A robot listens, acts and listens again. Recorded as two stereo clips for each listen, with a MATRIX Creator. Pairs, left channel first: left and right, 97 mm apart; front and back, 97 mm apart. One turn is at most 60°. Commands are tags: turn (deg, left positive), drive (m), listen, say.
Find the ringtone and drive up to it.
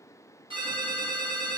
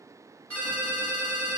<turn deg="-60"/>
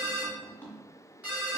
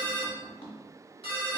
<turn deg="-15"/>
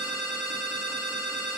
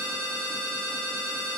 <drive m="1.0"/>
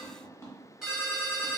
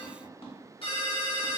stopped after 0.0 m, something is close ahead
<say>Blocked. The ringtone is further on, straight ahead.</say>